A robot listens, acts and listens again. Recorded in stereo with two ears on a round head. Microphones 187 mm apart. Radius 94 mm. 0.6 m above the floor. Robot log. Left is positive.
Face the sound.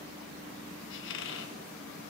note: The squeak: about 60° left or 120° left.
cmd yaw +60
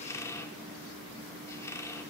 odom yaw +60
note: So it is at 15° left.
cmd yaw +15
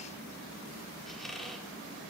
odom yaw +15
end: Facing the squeak, under 1 m away.